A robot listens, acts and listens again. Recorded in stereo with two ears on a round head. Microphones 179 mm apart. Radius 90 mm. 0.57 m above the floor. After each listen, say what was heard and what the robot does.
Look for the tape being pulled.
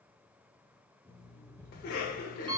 Keep listening.
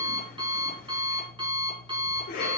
Keep listening.
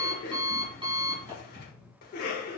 I can't make out tape being pulled to turn to.